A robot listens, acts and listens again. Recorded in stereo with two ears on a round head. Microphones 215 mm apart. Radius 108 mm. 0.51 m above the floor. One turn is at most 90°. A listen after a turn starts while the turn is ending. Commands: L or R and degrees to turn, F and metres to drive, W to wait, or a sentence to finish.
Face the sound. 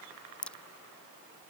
L30
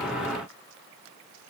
W
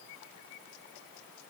I heard a crack, but can't make it out now. It was about 25° right or 145° left.